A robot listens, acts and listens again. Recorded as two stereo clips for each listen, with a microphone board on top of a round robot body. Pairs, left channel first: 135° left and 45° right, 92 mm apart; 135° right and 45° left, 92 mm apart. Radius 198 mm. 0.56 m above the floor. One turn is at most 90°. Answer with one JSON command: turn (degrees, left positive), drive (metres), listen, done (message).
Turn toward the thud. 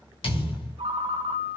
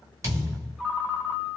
{"turn": 90}
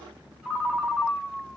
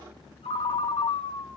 {"turn": 10}
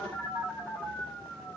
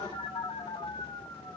{"done": "Facing where the thud came from. I can't hear it now."}